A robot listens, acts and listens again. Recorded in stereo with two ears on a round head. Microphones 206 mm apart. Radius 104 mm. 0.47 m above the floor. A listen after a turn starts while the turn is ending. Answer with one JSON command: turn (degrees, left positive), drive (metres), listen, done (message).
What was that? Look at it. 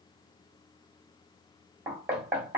{"turn": -30}
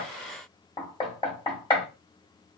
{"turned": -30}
{"turn": 20}
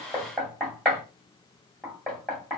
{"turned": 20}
{"done": "Facing the knocking, 1 to 2 m away."}